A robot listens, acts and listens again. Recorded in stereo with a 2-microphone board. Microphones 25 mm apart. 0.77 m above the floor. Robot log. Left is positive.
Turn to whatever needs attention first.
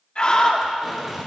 note: The scream: about 40° left or 140° left.
cmd yaw +40
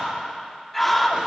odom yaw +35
end: Found it: a scream, straight ahead.